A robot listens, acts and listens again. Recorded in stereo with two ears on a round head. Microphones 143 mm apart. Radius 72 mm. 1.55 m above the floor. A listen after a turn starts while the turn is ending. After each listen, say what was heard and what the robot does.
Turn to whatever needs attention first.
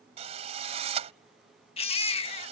The baby crying: about 35° left or 145° left. Turn 35° left.
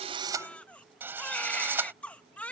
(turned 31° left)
So it is at 10° left. Turn 10° left.
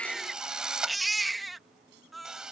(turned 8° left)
Facing the baby crying.